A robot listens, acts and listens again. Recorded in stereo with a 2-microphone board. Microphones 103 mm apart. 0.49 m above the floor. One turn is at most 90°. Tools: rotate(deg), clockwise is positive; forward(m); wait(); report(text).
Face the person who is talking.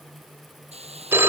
wait()
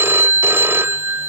wait()
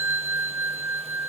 report("I can't make out anyone speaking, only a hiss and a phone ringing.")